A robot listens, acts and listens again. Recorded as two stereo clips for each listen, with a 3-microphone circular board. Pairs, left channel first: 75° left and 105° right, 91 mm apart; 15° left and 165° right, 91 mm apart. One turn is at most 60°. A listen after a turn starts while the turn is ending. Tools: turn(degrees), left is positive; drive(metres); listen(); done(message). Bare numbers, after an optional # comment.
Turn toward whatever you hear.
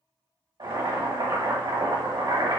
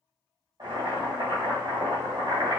# The boiling: 125° right.
turn(-60)
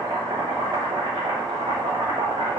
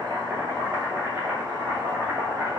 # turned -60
# The boiling is now 95° right.
turn(-60)
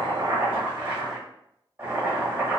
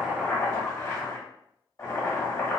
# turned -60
# The boiling is now 35° right.
turn(-35)
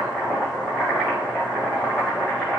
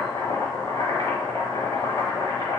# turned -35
done("Facing the boiling, 1 to 2 m away.")